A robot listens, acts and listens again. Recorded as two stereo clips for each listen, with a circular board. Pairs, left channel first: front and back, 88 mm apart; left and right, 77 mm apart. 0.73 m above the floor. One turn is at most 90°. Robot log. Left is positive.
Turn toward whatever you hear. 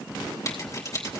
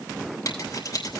note: The scissors: 55° left.
cmd yaw +55
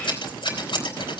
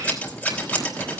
note: The scissors is now 25° left.
cmd yaw +25
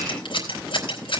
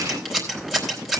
end: Found it: scissors, straight ahead.